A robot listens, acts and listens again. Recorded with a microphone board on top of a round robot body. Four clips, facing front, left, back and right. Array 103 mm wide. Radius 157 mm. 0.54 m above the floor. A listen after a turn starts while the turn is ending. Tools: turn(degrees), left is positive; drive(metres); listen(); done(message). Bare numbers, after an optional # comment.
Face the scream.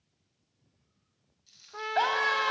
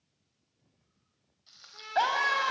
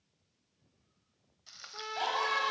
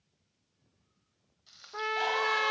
# The scream: 50° left.
turn(50)
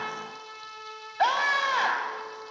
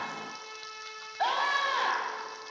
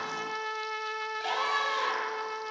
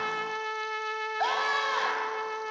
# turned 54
done("Facing the scream, over 4 m away.")